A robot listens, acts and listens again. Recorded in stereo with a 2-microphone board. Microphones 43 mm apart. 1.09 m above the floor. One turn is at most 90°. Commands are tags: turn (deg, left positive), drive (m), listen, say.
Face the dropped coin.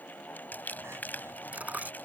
<turn deg="-40"/>
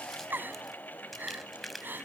<listen/>
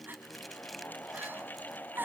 <say>I heard a dropped coin, but can't make it out now. It was about straight ahead or 100° right.</say>